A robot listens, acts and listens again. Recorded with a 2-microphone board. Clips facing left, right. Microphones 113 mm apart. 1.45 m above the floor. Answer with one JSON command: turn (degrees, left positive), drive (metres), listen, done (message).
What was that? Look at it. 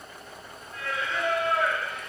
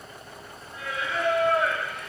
{"turn": 30}
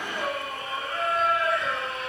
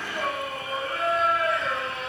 {"turn": 30}
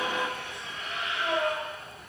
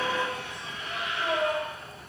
{"turn": -30}
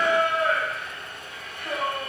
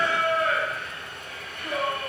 {"turn": 25}
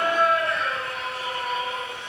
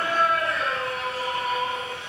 {"done": "Facing the singing, 2 to 4 m away."}